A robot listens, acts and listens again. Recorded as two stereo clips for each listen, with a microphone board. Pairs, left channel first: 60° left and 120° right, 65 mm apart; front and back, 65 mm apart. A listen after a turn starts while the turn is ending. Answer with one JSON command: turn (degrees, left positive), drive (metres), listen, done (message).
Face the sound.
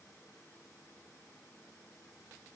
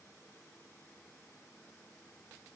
{"listen": true}
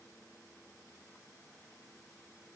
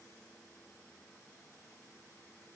{"listen": true}
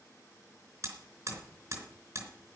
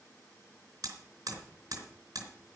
{"turn": -150}
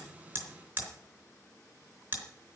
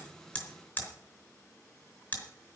{"turn": -60}
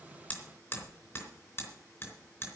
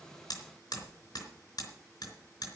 {"turn": 10}
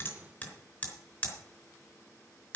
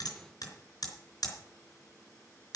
{"done": "Facing the hammering, 2 to 4 m away."}